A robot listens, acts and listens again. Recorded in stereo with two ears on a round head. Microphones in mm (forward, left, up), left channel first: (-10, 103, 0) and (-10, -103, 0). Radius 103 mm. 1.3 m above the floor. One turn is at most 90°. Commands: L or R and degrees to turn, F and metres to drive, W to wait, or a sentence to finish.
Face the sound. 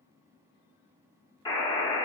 L15
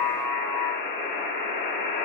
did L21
L90
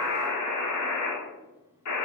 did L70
L75
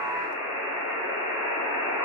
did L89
R15
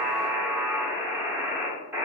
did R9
Found it: a buzzer, straight ahead, 1 to 2 m away.